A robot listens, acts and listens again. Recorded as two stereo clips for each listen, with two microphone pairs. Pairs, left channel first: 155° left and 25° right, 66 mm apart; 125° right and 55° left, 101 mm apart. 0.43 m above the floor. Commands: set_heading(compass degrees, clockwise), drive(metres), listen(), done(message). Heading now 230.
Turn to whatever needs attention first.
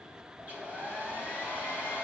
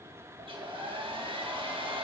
listen()
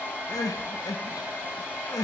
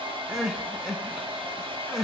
set_heading(80)
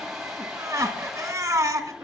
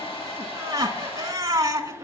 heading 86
done("Facing the crying, under 1 m away.")